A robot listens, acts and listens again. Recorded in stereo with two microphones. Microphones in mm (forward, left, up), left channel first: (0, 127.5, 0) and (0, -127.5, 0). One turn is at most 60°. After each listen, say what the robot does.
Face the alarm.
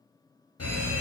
Turn 60° left.
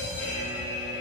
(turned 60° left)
Turn 25° left.
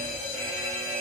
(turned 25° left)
Found it: an alarm, straight ahead, under 1 m away.